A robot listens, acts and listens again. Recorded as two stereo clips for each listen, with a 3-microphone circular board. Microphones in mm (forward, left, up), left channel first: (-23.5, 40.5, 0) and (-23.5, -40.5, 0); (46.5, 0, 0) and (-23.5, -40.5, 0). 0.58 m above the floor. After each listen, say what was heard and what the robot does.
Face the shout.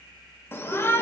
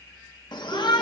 The shout: 30° left. Turn 30° left.
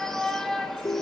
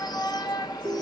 Found it: a shout, straight ahead.